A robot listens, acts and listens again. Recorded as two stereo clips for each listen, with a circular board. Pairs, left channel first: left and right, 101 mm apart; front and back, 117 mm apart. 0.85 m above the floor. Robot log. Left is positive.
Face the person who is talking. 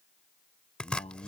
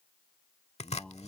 note: The man speaking: 80° left.
cmd yaw +80
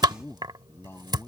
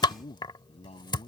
note: The man speaking is now 25° left.
cmd yaw +25
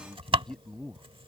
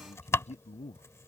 end: Facing the man speaking.